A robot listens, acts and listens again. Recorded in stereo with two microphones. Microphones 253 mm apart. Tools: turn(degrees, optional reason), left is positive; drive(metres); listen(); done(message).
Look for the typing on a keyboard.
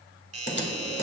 turn(degrees=45, reason="The typing on a keyboard: about 45° left or 135° left.")
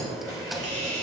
listen()
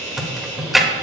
done("Found it: typing on a keyboard, straight ahead, 1 to 2 m away.")